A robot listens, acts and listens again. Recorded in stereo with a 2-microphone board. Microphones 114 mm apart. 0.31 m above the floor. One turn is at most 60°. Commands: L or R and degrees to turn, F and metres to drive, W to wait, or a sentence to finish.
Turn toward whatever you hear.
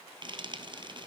R45
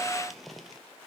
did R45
Found it: frying, straight ahead, 1 to 2 m away.